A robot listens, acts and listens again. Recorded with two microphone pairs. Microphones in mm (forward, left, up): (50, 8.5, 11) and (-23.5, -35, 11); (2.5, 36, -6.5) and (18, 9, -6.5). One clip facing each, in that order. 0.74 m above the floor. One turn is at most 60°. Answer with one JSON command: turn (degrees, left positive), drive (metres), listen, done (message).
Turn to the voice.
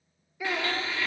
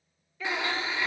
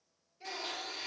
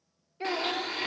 {"turn": -45}
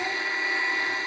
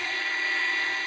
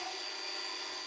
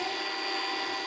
{"listen": true}
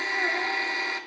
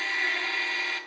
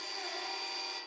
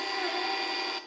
{"listen": true}
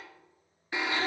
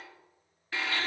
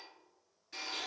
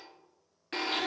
{"done": "Facing where the child speaking came from. I can't hear it now."}